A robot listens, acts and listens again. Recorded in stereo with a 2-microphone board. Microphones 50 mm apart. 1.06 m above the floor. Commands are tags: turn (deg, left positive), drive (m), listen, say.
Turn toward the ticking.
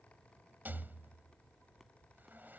<listen/>
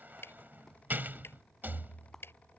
<turn deg="50"/>
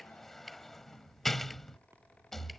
<say>Found it: ticking, straight ahead.</say>